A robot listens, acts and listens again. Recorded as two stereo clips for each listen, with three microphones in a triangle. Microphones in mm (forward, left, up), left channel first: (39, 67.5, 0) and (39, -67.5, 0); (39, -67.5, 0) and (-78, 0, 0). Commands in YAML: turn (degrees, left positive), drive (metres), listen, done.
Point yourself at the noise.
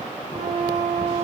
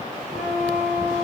turn: -45
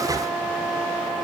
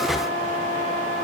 done: "Facing the flute, 2 to 4 m away."